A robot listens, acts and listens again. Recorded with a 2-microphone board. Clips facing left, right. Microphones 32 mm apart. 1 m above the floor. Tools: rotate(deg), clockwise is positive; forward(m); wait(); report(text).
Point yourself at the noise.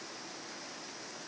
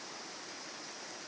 wait()
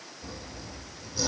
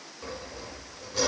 rotate(90)
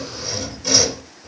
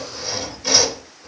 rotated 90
rotate(15)
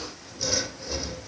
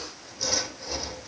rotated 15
report("Found it: sawing, straight ahead, over 4 m away.")